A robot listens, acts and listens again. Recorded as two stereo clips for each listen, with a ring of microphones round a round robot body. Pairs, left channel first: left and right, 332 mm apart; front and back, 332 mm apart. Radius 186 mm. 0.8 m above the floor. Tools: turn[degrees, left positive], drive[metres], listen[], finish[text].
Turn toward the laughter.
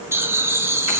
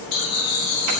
Thought: The laughter: 10° right.
Action: turn[-10]
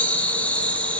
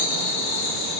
Action: finish[Found it: laughter, straight ahead, 2 to 4 m away.]